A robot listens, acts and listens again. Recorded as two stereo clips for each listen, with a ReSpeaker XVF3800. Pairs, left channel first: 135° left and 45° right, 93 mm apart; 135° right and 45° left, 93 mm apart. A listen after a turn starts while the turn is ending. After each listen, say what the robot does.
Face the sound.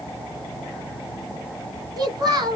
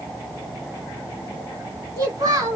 Facing the child speaking.